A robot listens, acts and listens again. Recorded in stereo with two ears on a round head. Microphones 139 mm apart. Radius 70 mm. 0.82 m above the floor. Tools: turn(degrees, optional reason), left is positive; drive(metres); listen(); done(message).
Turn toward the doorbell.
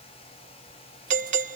turn(degrees=-45, reason="The doorbell: about 45° right or 135° right.")
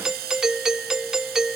done("Facing the doorbell.")